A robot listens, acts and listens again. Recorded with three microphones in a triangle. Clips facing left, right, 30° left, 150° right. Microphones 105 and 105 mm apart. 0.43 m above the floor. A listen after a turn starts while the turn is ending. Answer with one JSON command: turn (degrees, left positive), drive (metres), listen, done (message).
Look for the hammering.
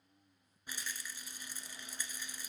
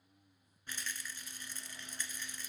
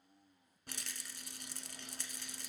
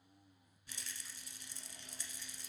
{"listen": true}
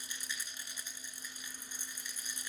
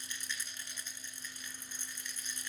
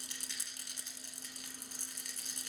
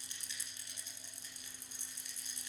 {"listen": true}
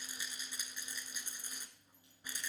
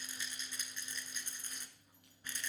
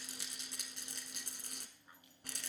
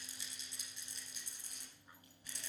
{"done": "I can't make out hammering, only a rattle."}